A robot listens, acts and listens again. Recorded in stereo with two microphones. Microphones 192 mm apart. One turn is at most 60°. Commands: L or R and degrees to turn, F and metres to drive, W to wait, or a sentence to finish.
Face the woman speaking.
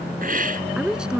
R30
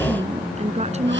R60
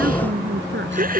R60
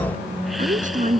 R45
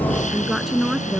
Found it: a woman speaking, straight ahead.